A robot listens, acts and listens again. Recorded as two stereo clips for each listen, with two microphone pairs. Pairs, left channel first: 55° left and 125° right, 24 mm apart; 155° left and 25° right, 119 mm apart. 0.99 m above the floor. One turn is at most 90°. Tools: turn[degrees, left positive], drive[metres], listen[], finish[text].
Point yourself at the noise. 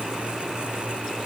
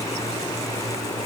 Action: listen[]
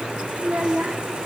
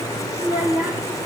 Thought: The child speaking: 105° right.
Action: turn[-90]
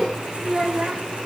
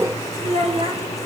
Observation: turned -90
Thought: The child speaking is now 60° right.
Action: turn[-60]
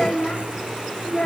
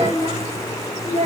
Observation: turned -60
Action: finish[Facing the child speaking, 2 to 4 m away.]